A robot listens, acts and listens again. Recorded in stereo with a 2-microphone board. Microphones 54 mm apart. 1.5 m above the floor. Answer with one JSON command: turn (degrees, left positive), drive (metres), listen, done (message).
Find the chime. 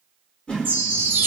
{"turn": -30}
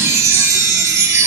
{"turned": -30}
{"turn": -115}
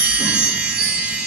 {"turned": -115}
{"turn": -25}
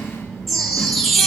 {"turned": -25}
{"done": "Found it: a chime, straight ahead, 1 to 2 m away."}